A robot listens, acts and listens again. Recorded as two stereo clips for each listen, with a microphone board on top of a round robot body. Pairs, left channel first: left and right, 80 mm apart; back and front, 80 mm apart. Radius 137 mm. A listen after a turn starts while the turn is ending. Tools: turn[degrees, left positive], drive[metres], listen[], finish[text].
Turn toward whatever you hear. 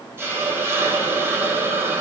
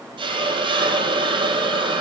Thought: The hiss: 25° right.
Action: turn[-25]
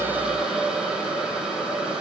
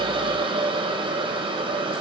Thought: The hiss is now 10° right.
Action: turn[-10]
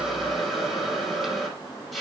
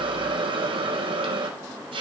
Action: finish[Facing the hiss.]